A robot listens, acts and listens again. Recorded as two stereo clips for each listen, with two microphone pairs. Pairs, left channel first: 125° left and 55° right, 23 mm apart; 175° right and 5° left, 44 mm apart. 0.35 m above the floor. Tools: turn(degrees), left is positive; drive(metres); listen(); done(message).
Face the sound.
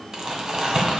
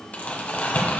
turn(degrees=-120)
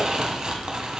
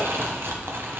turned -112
turn(degrees=-10)
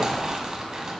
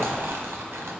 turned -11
done("Facing the crumpling.")